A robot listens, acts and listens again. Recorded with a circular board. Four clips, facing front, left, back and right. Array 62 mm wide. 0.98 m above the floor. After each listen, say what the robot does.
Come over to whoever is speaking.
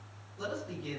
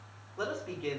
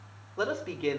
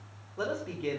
Turn 170° right.
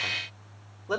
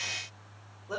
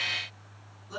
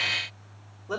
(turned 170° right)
Turn 10° right.
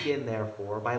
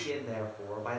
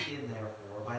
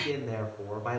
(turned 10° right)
Drive 1.0 m forward.
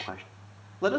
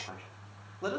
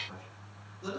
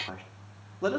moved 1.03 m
Drive 1.0 m forward.
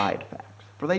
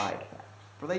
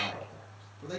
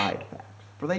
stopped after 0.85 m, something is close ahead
Turn 10° right.
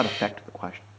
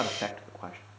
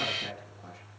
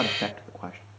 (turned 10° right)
I am next to the man speaking.